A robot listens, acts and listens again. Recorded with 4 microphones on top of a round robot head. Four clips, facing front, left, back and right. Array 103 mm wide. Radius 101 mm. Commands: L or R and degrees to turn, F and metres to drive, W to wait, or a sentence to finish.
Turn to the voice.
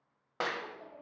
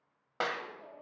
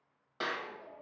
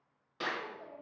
R20
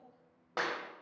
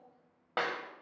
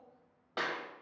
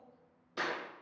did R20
W
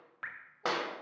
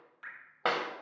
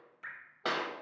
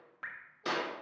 W
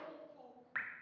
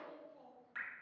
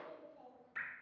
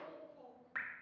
Facing the child speaking, 2 to 4 m away.